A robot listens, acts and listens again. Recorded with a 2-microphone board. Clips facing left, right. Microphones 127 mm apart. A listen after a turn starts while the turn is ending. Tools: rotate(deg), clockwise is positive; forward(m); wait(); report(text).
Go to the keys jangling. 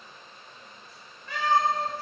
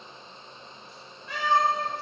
wait()
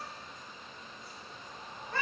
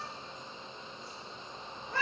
wait()
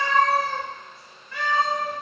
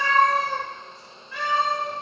report("I can't make out keys jangling, only a cat meowing.")